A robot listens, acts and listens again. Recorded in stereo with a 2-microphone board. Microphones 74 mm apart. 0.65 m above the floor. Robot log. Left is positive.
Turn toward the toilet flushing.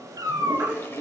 note: The toilet flushing: about 35° left or 145° left.
cmd yaw +35
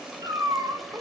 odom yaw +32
cmd idle
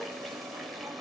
cmd idle
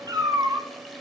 end: I heard a toilet flushing, but can't make it out now. It was about straight ahead or 115° left.